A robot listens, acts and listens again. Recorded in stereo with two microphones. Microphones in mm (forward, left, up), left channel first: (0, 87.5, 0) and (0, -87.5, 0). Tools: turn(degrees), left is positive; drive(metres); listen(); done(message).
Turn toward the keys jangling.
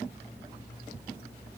listen()
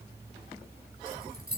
turn(degrees=-60)
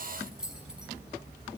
done("Facing the keys jangling, over 4 m away.")